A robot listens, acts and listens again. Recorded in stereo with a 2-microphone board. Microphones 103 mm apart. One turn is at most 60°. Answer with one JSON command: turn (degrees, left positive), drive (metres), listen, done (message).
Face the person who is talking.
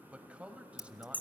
{"turn": -30}
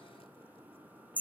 {"listen": true}
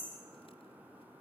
{"listen": true}
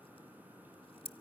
{"done": "I heard a man speaking, but can't make it out now. It was about 20° left or 140° right."}